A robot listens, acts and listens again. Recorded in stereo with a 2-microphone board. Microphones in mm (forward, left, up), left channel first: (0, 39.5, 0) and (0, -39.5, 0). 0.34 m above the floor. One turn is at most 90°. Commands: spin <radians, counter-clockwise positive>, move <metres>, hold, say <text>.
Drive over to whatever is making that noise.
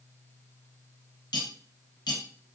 spin 1.57
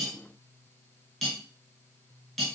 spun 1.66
move 1.0
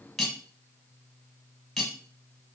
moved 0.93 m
move 1.0
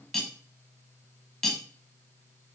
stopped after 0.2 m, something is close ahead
say I am next to the cutlery clinking.